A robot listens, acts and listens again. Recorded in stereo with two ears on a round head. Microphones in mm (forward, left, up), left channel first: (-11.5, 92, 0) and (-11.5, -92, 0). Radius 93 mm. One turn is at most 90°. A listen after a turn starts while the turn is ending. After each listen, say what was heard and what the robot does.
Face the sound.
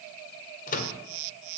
The microwave: about 40° left or 140° left. Turn 40° left.
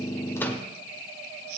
Keep listening.
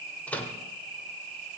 So it is at 10° left. Turn 10° left.
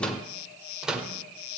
Found it: a microwave, straight ahead, 1 to 2 m away.